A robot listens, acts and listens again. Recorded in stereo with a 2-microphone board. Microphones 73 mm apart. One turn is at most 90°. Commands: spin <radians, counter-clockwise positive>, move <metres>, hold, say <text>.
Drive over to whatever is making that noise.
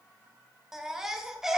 spin -0.52
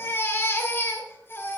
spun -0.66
spin 0.61
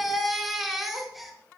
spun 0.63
move 1.0
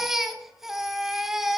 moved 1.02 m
move 1.0
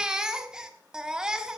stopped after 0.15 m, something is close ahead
spin -0.17
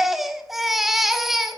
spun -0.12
say I am next to the baby crying.